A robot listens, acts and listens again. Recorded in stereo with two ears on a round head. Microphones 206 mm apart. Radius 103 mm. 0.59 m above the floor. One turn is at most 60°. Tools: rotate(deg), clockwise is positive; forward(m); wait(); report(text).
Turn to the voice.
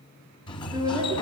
rotate(20)
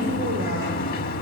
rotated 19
wait()
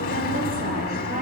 wait()
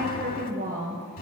rotate(60)
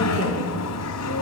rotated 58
rotate(60)
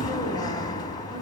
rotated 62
rotate(20)
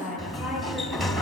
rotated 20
report("Facing the woman speaking.")